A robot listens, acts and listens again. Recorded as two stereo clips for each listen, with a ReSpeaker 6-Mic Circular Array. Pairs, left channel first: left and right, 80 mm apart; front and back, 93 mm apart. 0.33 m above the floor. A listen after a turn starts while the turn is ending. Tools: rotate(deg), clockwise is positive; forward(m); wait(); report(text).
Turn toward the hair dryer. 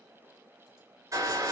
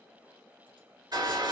rotate(135)
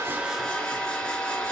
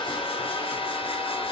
rotate(-10)
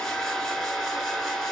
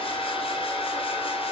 report("Facing the hair dryer.")